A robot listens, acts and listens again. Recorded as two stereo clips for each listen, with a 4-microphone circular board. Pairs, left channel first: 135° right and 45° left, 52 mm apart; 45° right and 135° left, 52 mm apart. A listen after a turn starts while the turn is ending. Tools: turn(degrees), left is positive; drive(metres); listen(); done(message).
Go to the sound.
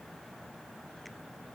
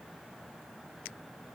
listen()
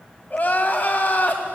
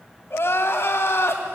turn(degrees=-80)
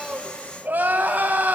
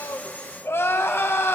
turn(degrees=-10)
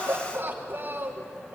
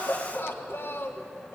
drive(metres=1.0)
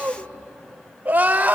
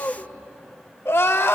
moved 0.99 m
turn(degrees=-10)
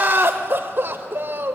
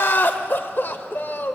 drive(metres=1.0)
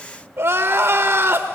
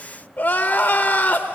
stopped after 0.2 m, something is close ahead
done("Arrived at the crying, straight ahead.")